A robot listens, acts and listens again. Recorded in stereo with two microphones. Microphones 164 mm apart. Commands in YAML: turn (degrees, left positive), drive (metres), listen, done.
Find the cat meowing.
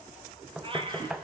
turn: -30
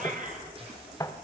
turn: -130
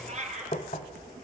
turn: -45
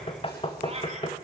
turn: -40
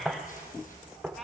done: "Facing the cat meowing, 2 to 4 m away."